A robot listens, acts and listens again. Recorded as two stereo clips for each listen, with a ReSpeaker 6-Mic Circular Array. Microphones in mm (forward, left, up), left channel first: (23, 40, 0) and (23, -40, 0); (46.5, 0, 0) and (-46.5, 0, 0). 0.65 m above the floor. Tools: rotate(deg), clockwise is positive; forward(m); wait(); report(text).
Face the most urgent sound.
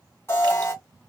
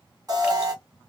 rotate(-140)
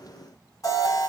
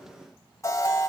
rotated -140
rotate(-50)
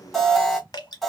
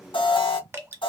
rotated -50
report("Found it: an alarm, straight ahead.")